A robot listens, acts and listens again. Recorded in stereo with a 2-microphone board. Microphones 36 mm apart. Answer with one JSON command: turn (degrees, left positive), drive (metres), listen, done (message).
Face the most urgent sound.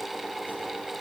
{"listen": true}
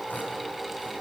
{"listen": true}
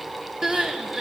{"turn": -15}
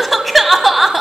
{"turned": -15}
{"done": "Found it: crying, straight ahead, 1 to 2 m away."}